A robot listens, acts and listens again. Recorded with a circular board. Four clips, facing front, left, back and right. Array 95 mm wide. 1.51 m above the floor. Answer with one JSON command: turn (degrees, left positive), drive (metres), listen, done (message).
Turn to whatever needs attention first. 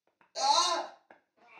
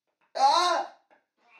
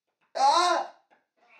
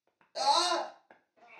{"turn": 145}
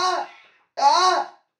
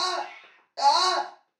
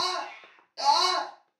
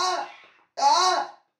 {"turn": -10}
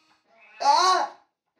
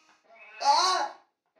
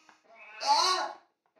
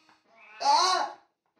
{"done": "Facing the scream, under 1 m away."}